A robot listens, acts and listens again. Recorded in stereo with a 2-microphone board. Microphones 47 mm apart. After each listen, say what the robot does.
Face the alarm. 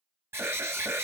Turn 60° right.
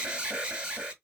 Turn 25° right.
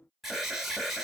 Found it: an alarm, straight ahead.